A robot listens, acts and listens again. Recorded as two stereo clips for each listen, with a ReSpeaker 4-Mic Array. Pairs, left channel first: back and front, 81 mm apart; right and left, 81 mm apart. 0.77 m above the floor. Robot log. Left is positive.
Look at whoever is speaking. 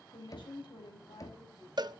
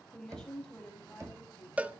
note: The woman speaking: 170° right.
cmd yaw -170
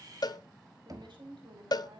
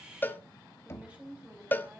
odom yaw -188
note: The woman speaking is now 15° left.
cmd yaw +15
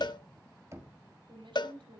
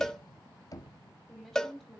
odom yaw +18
end: Facing the woman speaking, over 4 m away.